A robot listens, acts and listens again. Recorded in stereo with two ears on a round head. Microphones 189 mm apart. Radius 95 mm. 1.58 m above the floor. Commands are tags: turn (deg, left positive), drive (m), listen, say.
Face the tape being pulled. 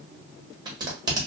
<turn deg="-20"/>
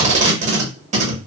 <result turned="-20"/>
<turn deg="-135"/>
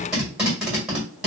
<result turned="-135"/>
<say>Facing the tape being pulled, 1 to 2 m away.</say>